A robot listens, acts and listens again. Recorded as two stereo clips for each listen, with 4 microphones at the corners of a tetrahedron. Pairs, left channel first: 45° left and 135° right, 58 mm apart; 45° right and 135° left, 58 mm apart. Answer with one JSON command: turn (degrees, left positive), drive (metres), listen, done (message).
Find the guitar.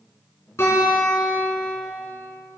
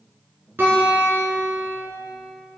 {"turn": 85}
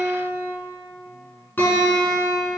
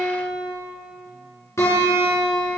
{"turn": -10}
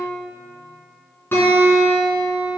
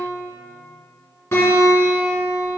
{"done": "Found it: a guitar, straight ahead, 2 to 4 m away."}